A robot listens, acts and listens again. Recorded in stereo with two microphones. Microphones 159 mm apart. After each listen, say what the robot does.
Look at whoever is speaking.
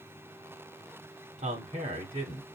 Turn 50° right.
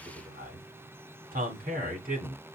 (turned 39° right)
Turn 80° right.
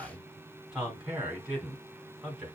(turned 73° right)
Found it: a man speaking, straight ahead, 2 to 4 m away.